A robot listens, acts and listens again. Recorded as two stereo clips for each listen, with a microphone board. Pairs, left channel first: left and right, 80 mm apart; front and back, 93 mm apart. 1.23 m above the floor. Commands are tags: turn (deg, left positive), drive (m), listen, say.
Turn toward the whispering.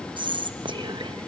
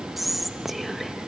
<turn deg="-90"/>
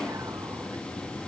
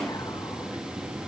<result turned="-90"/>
<listen/>
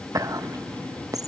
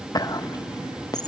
<turn deg="-45"/>
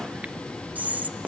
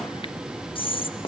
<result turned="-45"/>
<turn deg="-20"/>
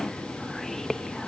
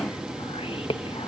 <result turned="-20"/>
<say>Facing the whispering.</say>